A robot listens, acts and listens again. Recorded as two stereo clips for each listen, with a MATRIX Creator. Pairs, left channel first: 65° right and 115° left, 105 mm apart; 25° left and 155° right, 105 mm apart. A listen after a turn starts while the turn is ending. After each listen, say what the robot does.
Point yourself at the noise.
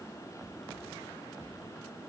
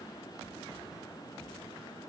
Keep listening.
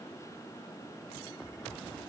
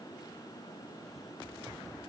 Keep listening.
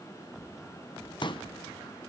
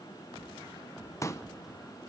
Turn 35° right.
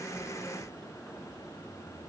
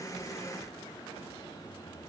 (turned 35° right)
I heard a pop from this way, but can't make it out now.